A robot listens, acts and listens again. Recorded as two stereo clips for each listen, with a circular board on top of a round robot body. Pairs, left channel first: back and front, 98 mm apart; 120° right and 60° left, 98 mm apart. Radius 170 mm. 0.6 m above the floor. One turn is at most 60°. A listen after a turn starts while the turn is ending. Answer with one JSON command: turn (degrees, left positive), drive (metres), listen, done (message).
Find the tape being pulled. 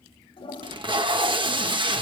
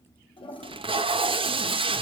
{"turn": 35}
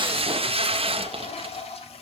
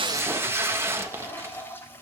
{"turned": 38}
{"done": "Facing the tape being pulled."}